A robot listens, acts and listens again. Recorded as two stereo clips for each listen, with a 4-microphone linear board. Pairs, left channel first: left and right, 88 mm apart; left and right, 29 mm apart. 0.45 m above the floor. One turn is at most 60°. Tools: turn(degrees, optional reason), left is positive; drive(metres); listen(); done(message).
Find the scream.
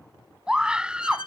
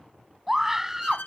turn(degrees=-30)
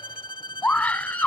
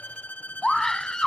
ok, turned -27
turn(degrees=15, reason="So it is at 15° left.")
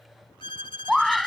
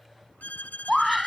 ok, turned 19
done("Found it: a scream, straight ahead.")